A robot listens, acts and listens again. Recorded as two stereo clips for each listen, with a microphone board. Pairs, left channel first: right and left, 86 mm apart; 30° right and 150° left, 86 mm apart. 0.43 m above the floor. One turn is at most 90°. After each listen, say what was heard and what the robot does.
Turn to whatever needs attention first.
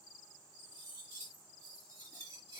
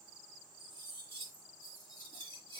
Keep listening.
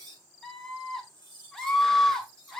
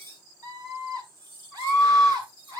The scream: 175° right. Turn 90° right.
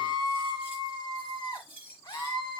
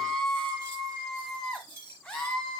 The scream is now 110° right. Turn 90° right.
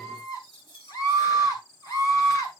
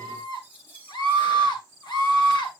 The scream is now 50° right. Turn 50° right.
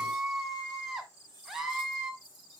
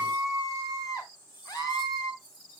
Found it: a scream, straight ahead.